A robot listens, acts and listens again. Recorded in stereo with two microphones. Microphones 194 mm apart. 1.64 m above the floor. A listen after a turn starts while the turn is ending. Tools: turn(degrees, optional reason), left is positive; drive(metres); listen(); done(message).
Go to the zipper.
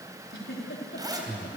turn(degrees=-20, reason="The zipper: about 20° right or 160° right.")
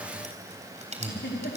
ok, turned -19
turn(degrees=-145, reason="So it is at 145° right.")
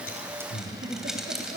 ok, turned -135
drive(metres=1.0)
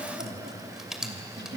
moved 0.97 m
drive(metres=1.0)
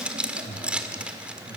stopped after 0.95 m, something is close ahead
turn(degrees=-10, reason="The zipper is now 10° right.")
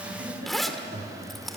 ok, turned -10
done("I am next to the zipper.")